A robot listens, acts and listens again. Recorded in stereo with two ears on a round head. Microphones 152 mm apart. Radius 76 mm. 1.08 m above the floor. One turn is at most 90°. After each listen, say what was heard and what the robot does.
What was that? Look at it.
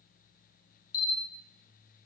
The camera shutter: about 60° left or 120° left. Turn 60° left.
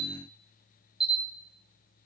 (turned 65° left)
Found it: a camera shutter, straight ahead, 2 to 4 m away.